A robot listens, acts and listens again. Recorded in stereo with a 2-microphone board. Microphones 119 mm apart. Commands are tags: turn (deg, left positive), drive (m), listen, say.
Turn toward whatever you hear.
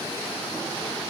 <listen/>
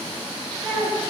<turn deg="-30"/>
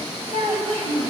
<turn deg="-110"/>
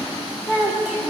<turn deg="-15"/>
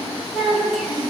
<say>Found it: a child speaking, straight ahead.</say>